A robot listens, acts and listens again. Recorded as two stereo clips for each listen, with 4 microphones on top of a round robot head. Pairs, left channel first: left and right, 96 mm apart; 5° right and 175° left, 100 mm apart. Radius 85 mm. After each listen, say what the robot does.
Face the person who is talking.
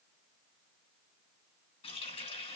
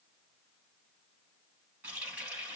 Keep listening.
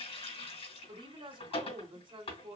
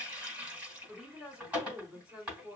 Turn 105° right.
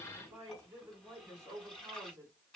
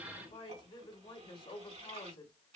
Turn 30° right.
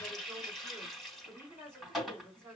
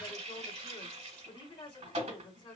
Turn 25° right.
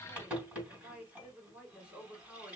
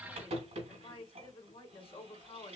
Turn 10° right.
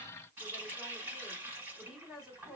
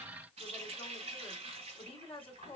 Facing the woman speaking, 2 to 4 m away.